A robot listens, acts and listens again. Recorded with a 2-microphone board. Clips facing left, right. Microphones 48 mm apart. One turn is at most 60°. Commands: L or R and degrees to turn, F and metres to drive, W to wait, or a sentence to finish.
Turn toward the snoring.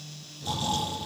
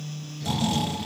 R60
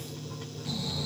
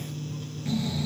R35
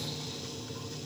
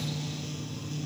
W
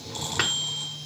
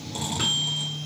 R15
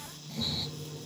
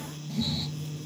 Found it: snoring, straight ahead, over 4 m away.